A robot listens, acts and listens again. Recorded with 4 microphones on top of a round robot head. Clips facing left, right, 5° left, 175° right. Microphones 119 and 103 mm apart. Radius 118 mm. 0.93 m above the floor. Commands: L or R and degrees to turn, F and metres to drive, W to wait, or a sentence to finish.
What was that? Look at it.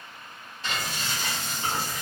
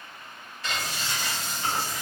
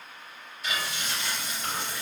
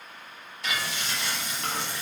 L160
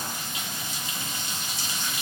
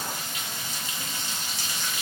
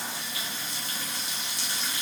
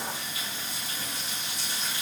L20
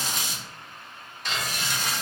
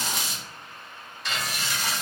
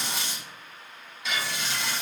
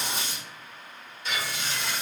Facing the frying.